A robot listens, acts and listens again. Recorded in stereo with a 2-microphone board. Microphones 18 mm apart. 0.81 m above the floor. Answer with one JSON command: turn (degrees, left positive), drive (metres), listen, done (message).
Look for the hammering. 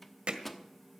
{"turn": -90}
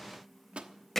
{"turn": 15}
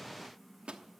{"listen": true}
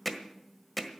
{"done": "Facing the hammering."}